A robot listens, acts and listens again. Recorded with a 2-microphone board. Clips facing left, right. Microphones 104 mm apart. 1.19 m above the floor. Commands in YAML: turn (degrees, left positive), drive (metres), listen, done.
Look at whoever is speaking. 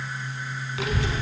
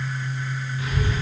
turn: 90
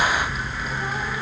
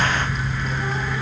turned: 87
done: "Facing the child speaking, under 1 m away."